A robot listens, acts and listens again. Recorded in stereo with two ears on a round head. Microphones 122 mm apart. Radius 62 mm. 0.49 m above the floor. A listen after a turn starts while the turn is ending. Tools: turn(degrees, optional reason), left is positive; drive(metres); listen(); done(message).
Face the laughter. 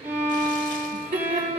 turn(degrees=-50, reason="The laughter: about 50° right or 130° right.")
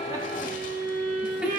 turn(degrees=-10, reason="So it is at 10° right.")
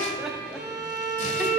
listen()
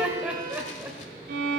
turn(degrees=-15, reason="The laughter is now 15° right.")
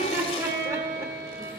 turn(degrees=-25, reason="The laughter is now 25° right.")
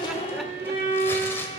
listen()
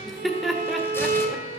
done("Found it: laughter, straight ahead, 1 to 2 m away.")